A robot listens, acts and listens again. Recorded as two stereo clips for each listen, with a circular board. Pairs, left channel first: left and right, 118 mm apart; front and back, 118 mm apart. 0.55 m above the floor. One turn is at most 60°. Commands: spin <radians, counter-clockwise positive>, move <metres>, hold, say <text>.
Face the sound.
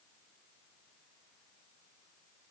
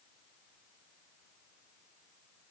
hold
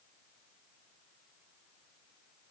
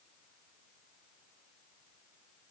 hold
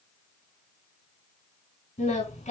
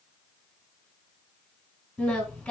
spin 1.05
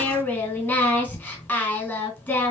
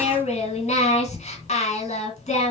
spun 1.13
spin 0.35
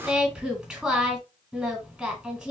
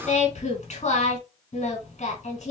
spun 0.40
say Facing the singing.